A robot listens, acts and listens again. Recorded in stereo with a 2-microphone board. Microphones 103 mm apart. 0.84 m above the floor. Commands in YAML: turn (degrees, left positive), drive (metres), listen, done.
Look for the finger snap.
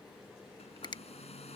turn: 45
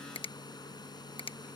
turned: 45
turn: 80
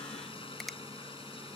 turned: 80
listen: true
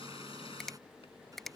done: "Found it: a finger snap, straight ahead."